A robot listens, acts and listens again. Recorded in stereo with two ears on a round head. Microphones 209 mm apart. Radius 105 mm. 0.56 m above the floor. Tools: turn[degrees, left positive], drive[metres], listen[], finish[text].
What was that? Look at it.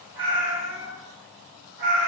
Thought: The cat meowing: about 40° right or 140° right.
Action: turn[-40]
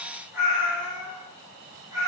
Thought: So it is at 15° right.
Action: turn[-15]
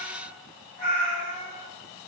Thought: The cat meowing is now 10° right.
Action: turn[-10]
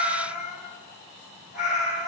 Action: finish[Found it: a cat meowing, straight ahead, 2 to 4 m away.]